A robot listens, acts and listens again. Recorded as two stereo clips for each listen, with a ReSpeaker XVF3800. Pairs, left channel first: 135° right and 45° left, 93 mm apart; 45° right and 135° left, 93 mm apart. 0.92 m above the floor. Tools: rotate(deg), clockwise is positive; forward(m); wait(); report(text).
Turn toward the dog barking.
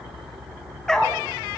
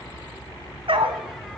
rotate(-145)
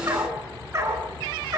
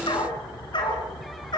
rotate(10)
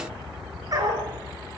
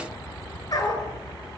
report("Facing the dog barking, over 4 m away.")